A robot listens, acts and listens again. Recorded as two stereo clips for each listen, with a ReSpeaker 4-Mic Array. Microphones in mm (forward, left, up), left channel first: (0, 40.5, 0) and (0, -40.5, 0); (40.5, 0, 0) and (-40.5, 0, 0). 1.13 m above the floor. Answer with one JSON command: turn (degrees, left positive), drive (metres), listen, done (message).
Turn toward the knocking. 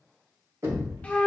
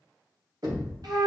{"turn": -140}
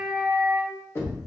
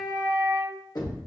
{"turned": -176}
{"turn": 35}
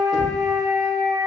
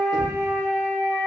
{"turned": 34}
{"listen": true}
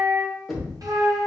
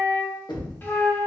{"done": "Found it: knocking, straight ahead, 1 to 2 m away."}